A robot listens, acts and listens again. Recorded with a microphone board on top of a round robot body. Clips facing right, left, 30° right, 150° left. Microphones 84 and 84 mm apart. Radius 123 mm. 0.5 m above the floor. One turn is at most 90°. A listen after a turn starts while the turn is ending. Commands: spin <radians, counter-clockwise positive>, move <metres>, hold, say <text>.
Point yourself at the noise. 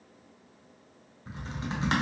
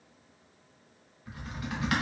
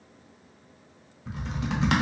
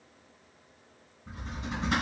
spin -0.52
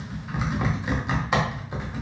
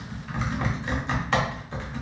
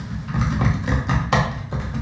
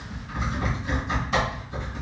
spin -0.26
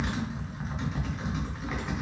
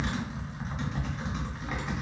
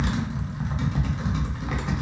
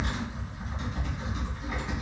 say Found it: typing on a keyboard, straight ahead, under 1 m away.